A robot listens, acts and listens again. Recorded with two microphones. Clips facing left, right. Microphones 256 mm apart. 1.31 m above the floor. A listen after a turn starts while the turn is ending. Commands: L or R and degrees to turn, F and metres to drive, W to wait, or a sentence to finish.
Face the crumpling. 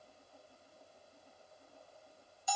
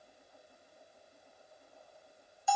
W
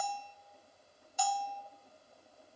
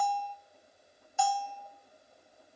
W
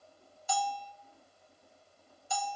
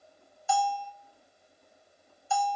I can't make out crumpling to turn to.